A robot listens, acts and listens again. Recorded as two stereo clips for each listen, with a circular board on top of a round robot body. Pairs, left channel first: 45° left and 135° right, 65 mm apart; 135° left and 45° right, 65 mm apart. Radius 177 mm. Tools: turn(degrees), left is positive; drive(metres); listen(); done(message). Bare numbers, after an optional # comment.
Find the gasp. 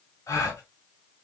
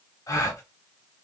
# The gasp: 90° left.
turn(90)
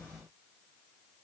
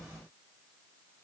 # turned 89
done("Facing where the gasp came from. I can't hear it now.")